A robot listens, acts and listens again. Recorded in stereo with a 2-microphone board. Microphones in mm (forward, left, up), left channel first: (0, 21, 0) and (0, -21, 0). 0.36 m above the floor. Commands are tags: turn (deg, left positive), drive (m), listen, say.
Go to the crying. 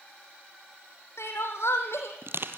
<turn deg="90"/>
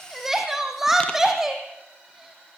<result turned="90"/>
<turn deg="-10"/>
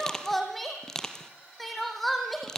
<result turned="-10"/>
<drive m="1.0"/>
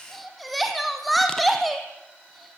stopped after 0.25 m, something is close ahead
<say>Blocked. The crying is further on, straight ahead.</say>